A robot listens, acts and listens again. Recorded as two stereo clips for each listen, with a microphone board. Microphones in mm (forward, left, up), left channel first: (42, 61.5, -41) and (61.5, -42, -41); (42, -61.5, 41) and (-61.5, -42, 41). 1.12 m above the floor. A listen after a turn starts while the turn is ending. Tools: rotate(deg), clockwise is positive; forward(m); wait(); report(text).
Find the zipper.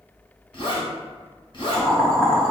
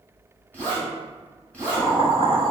rotate(-65)
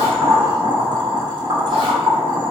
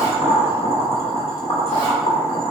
wait()
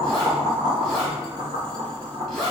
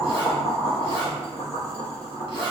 rotate(-15)
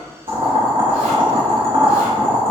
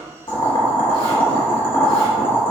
wait()
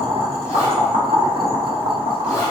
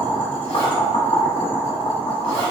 wait()
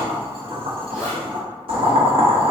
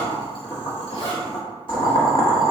report("Found it: a zipper, straight ahead.")